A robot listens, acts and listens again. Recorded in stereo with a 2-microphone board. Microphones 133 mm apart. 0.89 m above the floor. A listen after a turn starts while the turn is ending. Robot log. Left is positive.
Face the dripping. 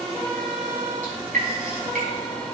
cmd yaw -90
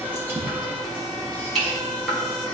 end: Found it: dripping, straight ahead, over 4 m away.